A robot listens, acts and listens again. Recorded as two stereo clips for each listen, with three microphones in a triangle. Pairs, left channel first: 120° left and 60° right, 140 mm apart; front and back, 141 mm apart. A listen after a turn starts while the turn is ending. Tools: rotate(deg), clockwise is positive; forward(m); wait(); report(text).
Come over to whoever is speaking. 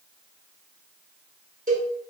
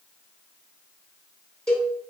wait()
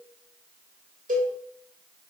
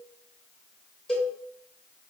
wait()
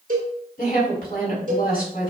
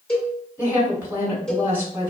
rotate(-105)
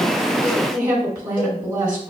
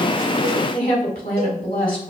forward(1.0)
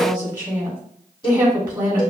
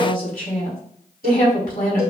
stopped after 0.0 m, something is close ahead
report("Something is in my way. I am facing the woman speaking but have not reached it.")